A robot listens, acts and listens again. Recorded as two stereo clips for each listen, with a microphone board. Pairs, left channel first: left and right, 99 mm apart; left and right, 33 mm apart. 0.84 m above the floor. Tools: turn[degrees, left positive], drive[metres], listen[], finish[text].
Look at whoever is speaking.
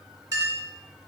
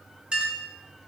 Action: listen[]
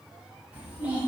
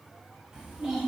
Action: turn[-30]
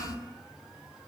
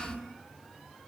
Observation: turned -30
Thought: So it is at 15° left.
Action: turn[15]
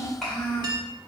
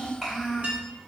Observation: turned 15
Action: finish[Found it: a child speaking, straight ahead, 1 to 2 m away.]